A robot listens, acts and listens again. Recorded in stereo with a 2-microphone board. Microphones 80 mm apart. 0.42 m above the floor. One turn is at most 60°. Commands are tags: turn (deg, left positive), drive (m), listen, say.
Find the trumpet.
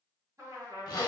<turn deg="-40"/>
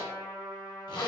<say>Facing the trumpet, 1 to 2 m away.</say>